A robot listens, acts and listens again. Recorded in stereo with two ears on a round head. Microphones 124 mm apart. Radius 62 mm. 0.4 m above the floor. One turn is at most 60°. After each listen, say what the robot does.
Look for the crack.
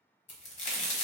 Turn 55° left.
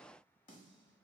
Keep listening.
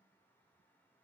I heard a crack, but can't make it out now. It was about straight ahead or 70° left.